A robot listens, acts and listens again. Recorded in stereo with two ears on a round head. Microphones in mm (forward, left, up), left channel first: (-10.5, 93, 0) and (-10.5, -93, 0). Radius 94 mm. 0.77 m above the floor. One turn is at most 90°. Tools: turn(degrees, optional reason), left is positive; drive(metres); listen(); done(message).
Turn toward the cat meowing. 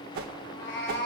turn(degrees=55, reason="The cat meowing: about 55° left or 125° left.")
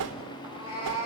turn(degrees=75, reason="So it is at 75° left.")
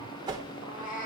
turn(degrees=40, reason="The cat meowing is now 40° left.")
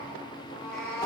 turn(degrees=15, reason="The cat meowing is now 15° left.")
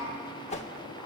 listen()
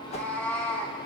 turn(degrees=10, reason="The cat meowing is now 10° left.")
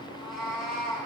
done("Facing the cat meowing, 2 to 4 m away.")